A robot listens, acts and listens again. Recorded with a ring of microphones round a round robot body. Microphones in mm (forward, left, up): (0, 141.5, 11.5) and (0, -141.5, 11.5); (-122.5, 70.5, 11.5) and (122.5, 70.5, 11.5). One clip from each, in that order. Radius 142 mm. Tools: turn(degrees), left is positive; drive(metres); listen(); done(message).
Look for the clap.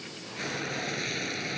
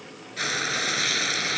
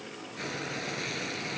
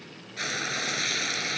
listen()
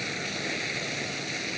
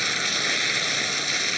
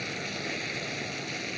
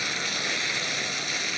listen()
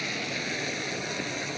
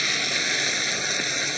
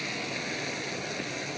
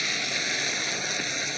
done("I can't make out a clap, only frying.")